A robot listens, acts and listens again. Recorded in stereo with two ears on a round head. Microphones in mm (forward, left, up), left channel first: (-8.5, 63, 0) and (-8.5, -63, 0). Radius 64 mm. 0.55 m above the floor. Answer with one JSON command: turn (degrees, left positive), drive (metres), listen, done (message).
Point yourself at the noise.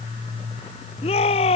{"turn": 40}
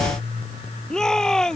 {"done": "Facing the shout."}